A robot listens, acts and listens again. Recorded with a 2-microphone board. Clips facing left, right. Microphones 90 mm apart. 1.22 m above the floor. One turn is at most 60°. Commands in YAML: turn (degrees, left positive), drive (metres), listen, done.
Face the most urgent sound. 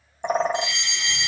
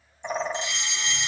turn: -30
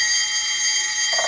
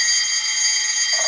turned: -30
done: "Facing the fire alarm, 1 to 2 m away."